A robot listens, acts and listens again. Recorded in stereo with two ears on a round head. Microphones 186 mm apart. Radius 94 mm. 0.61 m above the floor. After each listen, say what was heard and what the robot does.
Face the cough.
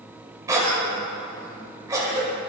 The cough: about 15° right or 165° right. Turn 15° right.
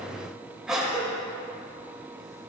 Found it: a cough, straight ahead, 2 to 4 m away.